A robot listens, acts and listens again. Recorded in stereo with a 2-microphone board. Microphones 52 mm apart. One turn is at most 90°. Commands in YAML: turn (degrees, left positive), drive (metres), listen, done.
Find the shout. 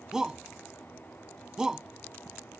turn: -30
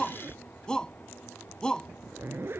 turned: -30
turn: 15
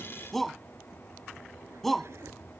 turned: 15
done: "Facing the shout."